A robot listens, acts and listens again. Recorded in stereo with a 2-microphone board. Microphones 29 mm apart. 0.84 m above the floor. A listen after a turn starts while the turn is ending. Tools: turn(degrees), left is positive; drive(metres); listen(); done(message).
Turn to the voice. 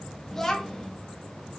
turn(degrees=15)
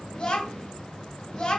turn(degrees=150)
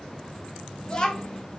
turn(degrees=35)
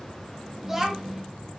turn(degrees=-10)
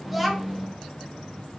done("Facing the child speaking.")